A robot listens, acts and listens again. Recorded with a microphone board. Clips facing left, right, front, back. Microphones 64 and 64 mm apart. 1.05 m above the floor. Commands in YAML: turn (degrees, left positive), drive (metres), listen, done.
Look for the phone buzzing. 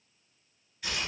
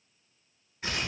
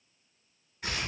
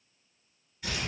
listen: true
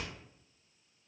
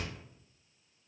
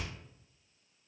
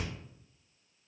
listen: true
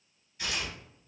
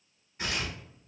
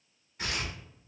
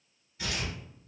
done: "I can't make out a phone buzzing to turn to."